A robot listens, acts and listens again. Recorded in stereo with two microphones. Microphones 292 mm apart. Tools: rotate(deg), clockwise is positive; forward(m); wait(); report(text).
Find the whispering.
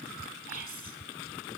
rotate(-25)
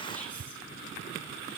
wait()
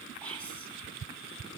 report("Found it: whispering, straight ahead.")